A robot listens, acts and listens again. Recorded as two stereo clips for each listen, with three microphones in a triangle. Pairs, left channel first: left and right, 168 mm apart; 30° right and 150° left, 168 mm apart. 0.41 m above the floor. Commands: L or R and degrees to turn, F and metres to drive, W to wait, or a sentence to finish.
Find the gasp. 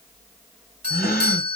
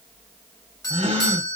L100
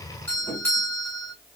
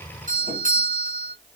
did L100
Facing where the gasp came from. I can't hear it now.